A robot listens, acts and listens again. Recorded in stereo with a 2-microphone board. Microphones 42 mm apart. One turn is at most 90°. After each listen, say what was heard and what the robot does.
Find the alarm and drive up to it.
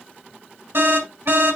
The alarm: about 65° right or 115° right. Turn 65° right.
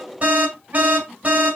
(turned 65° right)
So it is at 40° right. Turn 40° right.
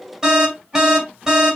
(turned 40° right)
The alarm is now 10° right. Turn 10° right.
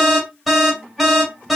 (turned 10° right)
Drive 1.0 m forward.
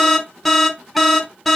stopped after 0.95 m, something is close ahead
Arrived at the alarm, straight ahead.